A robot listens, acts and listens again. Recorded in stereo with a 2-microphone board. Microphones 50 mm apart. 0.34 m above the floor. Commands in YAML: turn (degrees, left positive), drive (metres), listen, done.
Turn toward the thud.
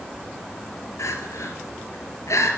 listen: true
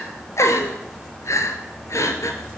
listen: true
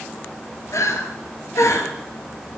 done: "I can't make out a thud, only crying."